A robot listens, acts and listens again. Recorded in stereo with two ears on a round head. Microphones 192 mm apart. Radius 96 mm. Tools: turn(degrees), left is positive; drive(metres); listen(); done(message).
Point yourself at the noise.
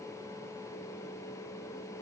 listen()
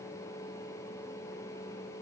listen()
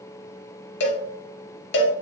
turn(degrees=55)
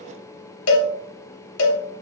turn(degrees=70)
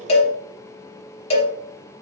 turn(degrees=30)
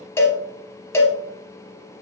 turn(degrees=10)
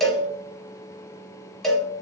done("Found it: a cowbell, straight ahead, under 1 m away.")